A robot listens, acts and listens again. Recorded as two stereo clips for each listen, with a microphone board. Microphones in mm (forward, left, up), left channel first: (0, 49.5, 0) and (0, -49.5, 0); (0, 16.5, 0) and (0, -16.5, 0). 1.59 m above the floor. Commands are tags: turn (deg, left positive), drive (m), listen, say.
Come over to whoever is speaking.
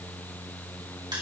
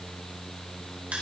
<listen/>
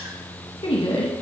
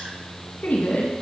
<turn deg="55"/>
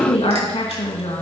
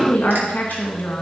<turn deg="65"/>
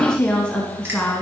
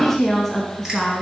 <turn deg="10"/>
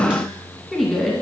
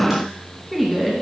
<drive m="1.0"/>
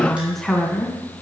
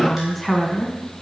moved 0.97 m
<drive m="1.0"/>
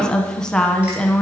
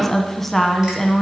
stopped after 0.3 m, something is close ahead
<say>I am next to the woman speaking.</say>